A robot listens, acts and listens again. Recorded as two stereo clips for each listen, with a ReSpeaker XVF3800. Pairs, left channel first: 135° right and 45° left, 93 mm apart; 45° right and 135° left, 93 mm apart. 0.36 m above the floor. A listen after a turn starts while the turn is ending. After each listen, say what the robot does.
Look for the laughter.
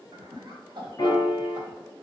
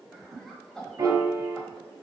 Turn 40° left.
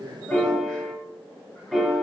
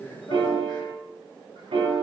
Keep listening.
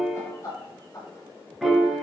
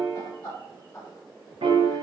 Turn 95° right.
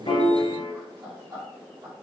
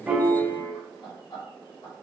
Facing the laughter, 2 to 4 m away.